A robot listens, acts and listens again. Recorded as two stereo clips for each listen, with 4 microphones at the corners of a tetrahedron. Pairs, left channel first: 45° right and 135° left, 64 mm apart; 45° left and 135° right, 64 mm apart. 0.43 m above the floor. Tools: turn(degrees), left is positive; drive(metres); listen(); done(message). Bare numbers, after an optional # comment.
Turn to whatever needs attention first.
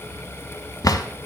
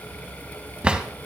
listen()
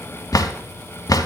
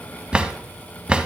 listen()
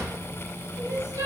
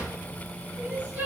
# The crying: 165° left.
turn(165)
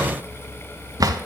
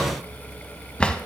listen()
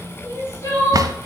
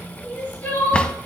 # The crying is now 15° right.
turn(-15)
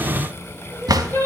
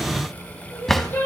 done("Facing the crying.")